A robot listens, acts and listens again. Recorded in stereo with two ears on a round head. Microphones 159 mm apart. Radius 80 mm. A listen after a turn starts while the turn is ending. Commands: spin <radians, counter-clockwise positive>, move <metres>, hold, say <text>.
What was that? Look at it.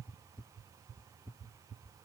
hold
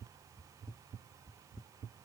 hold
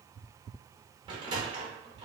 spin -0.44
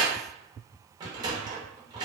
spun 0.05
spin -0.44
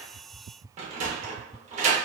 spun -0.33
spin -2.44
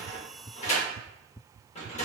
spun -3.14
spin 0.70
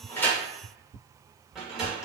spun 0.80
say Found it: a sliding door, straight ahead.